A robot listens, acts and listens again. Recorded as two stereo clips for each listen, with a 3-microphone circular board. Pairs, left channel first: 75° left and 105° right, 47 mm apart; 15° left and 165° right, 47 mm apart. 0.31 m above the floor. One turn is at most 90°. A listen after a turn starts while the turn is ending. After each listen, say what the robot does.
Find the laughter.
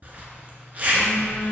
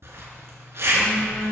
Keep listening.
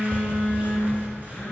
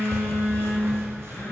Keep listening.
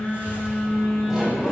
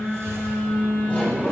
Turn 25° right.
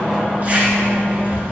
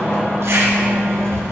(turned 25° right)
Turn 30° right.
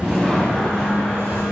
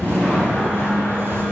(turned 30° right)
Facing the laughter.